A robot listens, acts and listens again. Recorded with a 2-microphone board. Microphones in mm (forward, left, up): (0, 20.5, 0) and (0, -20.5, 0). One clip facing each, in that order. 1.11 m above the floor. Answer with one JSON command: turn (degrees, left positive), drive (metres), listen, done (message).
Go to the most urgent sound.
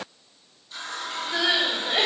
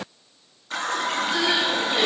{"turn": 45}
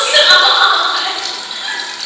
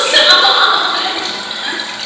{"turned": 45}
{"drive": 1.0}
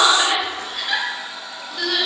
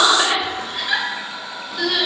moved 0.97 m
{"drive": 1.0}
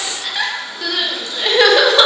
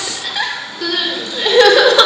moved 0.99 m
{"turn": 10}
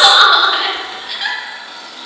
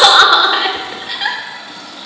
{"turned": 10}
{"drive": 1.0}
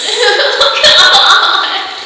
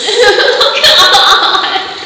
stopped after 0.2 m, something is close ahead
{"done": "I am next to the crying."}